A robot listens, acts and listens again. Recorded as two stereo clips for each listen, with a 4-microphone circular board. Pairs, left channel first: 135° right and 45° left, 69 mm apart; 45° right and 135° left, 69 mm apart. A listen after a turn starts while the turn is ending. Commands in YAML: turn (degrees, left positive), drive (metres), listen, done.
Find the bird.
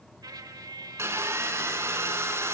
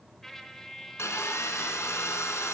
listen: true
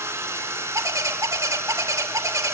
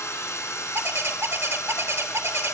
turn: 85
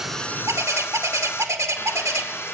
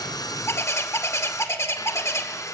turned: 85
done: "Facing the bird, 1 to 2 m away."